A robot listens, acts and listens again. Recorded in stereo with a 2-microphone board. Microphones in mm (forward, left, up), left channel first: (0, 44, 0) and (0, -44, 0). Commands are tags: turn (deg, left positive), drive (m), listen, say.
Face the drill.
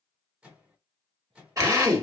<turn deg="-35"/>
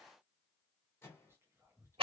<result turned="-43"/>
<turn deg="-100"/>
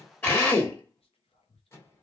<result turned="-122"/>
<turn deg="25"/>
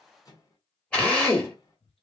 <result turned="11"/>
<turn deg="10"/>
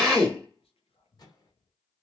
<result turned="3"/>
<say>Found it: a drill, straight ahead.</say>